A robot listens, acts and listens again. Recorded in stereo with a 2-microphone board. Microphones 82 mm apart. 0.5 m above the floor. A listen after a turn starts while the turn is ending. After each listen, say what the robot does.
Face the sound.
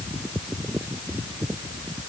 Keep listening.
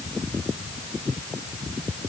Keep listening.
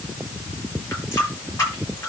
Turn 35° left.
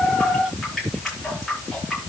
Facing the running tap.